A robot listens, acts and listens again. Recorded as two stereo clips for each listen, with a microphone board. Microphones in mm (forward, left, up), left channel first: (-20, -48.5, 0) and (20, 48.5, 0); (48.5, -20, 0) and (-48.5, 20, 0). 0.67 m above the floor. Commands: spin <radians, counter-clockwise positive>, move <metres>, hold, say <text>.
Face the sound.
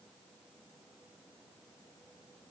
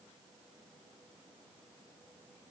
hold
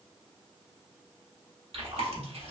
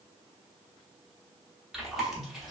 spin 1.22
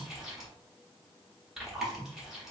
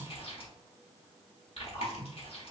spin -0.35
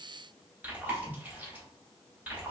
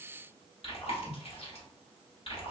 say Facing the chewing.